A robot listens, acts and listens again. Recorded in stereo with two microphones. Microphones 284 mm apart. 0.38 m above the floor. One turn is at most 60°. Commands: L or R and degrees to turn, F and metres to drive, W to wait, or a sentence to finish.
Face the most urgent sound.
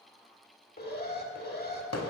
L35
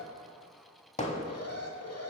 L60
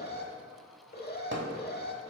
L40
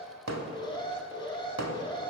L20
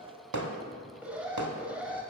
Facing the alarm.